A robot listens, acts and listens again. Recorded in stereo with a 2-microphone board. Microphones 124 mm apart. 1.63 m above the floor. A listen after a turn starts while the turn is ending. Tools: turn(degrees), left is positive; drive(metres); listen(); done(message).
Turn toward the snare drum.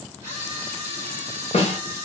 turn(degrees=55)
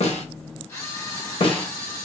turn(degrees=55)
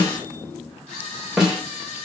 done("Found it: a snare drum, straight ahead, under 1 m away.")